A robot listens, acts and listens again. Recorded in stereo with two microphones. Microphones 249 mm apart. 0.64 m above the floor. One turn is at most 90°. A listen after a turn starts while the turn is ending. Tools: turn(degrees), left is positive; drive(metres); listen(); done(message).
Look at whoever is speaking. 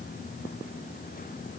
listen()
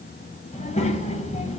turn(degrees=25)
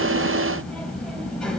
done("Facing the child speaking.")